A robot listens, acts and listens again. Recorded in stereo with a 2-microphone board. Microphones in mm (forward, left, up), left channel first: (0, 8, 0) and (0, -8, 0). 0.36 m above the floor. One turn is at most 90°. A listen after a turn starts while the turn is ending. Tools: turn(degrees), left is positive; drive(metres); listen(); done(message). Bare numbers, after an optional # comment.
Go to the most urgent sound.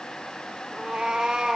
listen()
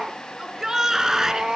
# The shout: about 35° right or 145° right.
turn(-35)
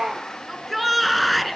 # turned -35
drive(1.0)
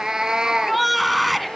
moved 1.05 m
drive(1.0)
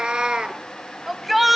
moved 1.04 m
# The shout is now 10° right.
turn(-10)
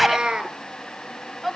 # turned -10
drive(1.0)
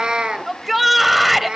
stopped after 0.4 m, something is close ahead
# The shout is now 10° right.
turn(-10)
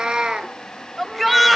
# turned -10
done("Arrived at the shout, straight ahead.")